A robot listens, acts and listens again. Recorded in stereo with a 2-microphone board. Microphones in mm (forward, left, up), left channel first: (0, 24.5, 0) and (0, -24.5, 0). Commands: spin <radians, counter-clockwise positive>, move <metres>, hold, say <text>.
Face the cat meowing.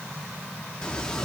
spin 0.52
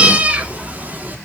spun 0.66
spin -0.70
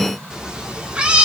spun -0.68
spin -0.44
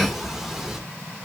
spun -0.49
spin -0.17
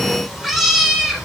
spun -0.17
spin -0.17
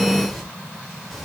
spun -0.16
say Found it: a cat meowing, straight ahead, 2 to 4 m away.